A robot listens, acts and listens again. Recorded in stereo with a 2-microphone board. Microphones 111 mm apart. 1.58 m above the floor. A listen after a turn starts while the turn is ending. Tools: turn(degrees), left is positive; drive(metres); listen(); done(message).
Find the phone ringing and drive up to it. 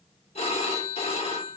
turn(degrees=70)
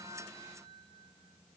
listen()
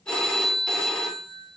turn(degrees=10)
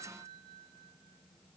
listen()
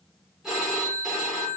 drive(metres=1.0)
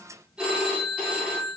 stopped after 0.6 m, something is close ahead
turn(degrees=-10)
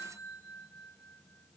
listen()
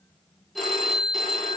done("Blocked. The phone ringing is further on, straight ahead.")